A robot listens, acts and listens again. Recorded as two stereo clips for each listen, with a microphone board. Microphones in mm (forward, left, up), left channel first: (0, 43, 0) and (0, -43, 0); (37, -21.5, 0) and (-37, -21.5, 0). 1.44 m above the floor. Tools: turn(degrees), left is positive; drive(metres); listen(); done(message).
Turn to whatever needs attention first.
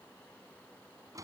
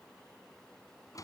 listen()
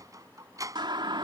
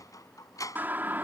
turn(degrees=-115)
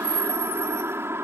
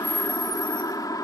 turn(degrees=-30)
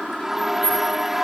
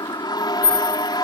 done("Found it: a siren, straight ahead.")